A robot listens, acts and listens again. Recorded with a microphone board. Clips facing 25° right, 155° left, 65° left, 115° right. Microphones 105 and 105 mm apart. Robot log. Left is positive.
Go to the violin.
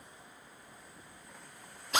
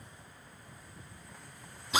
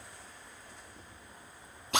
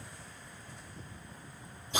cmd idle
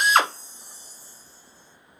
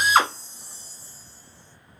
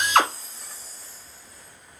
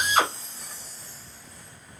cmd idle
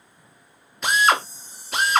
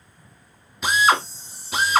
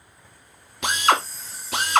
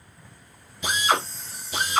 end: I can't make out a violin to turn to.